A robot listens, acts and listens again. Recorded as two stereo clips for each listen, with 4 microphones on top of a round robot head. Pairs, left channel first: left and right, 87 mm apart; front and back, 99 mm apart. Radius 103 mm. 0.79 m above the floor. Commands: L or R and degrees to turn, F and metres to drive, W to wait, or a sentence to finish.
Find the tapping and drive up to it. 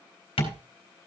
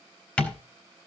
L75
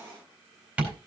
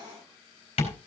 R10
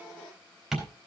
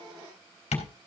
F1.0
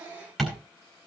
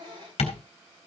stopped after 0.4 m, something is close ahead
Blocked. The tapping is further on, straight ahead.